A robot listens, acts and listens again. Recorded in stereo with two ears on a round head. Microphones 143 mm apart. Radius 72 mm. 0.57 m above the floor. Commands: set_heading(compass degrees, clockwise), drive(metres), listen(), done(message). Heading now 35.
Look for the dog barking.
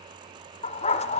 set_heading(355)
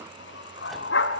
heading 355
set_heading(255)
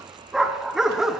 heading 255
done("Facing the dog barking.")